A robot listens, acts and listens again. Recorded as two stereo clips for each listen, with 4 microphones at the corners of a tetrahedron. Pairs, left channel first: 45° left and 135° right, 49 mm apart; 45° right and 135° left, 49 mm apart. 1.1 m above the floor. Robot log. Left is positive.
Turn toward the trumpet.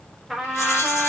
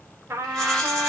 note: The trumpet: 140° left.
cmd yaw +140
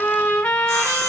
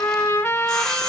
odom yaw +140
note: The trumpet is now 15° right.
cmd yaw -15
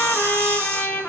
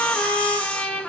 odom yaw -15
end: Found it: a trumpet, straight ahead, under 1 m away.